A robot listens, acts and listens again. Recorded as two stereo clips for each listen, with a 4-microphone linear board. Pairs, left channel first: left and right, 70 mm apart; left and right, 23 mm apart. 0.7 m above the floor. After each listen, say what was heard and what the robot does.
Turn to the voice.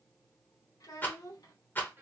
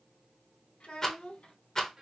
The child speaking: about 65° left or 115° left. Turn 65° left.
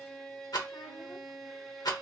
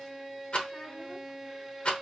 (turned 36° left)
So it is at 80° left. Turn 80° left.
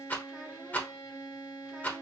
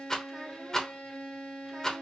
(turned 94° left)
Nothing new. It was at 15° right. Turn 15° right.
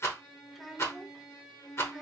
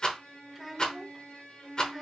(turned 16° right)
Facing the child speaking.